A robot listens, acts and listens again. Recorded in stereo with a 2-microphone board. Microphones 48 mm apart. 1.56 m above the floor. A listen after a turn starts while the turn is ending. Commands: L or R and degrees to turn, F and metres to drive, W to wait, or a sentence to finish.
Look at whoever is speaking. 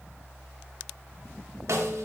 W
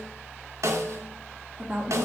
R20
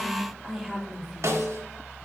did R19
Found it: a woman speaking, straight ahead, 2 to 4 m away.